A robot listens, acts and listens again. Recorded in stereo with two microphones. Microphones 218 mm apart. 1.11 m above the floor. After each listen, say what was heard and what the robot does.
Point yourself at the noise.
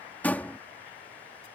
Turn 30° left.
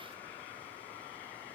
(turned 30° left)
Keep listening.
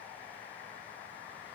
I heard a door slam, but can't make it out now. It was about 25° right or 145° left.